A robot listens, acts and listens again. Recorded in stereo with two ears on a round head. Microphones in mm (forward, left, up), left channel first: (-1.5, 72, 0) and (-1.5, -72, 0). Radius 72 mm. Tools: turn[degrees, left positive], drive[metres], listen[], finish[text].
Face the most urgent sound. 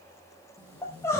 Thought: The crying: about 15° left or 165° left.
Action: turn[15]
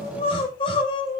Thought: So it is at 145° left.
Action: turn[145]
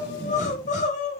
Thought: The crying is now 50° left.
Action: turn[50]
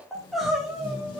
Action: finish[Found it: crying, straight ahead, 2 to 4 m away.]